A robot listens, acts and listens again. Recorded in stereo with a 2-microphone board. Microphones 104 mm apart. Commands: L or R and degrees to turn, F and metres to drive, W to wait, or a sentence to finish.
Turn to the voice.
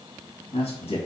L70
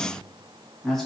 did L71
Facing the man speaking.